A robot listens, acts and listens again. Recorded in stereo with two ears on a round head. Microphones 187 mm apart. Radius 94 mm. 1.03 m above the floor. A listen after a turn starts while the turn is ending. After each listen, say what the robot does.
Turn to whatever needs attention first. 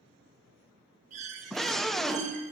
Turn 30° left.
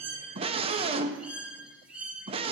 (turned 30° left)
Turn 25° right.
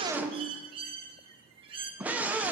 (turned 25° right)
Facing the scream.